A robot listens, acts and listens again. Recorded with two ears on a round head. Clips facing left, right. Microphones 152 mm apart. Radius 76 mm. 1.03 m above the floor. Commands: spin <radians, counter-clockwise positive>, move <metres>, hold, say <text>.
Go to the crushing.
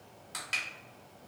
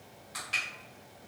spin 1.05
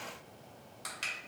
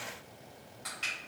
hold
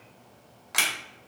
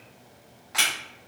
spin 1.05
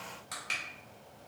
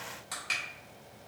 move 1.0
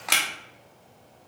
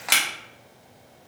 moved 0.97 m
move 1.0
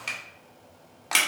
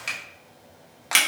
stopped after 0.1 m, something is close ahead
say Arrived at the crushing, straight ahead.